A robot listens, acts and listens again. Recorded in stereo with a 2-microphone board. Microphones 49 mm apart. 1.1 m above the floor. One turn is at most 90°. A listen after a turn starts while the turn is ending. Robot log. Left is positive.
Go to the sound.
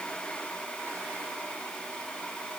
cmd idle
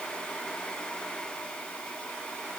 cmd idle
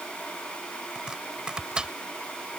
note: The chopping: about 20° right or 160° right.
cmd yaw -20
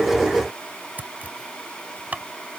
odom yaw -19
note: So it is at 145° right.
cmd yaw -90
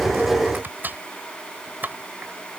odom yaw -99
note: The chopping is now 45° right.
cmd yaw -45
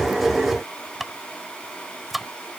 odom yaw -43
cmd fwd 1.0
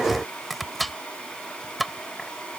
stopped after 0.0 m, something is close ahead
end: Blocked. The chopping is further on, straight ahead.